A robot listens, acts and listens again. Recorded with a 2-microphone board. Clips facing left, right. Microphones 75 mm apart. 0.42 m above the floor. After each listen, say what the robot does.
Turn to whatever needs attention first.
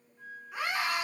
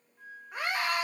Turn 45° right.
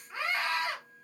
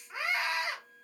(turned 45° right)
Turn 15° right.
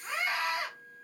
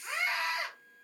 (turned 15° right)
Facing the scream, 1 to 2 m away.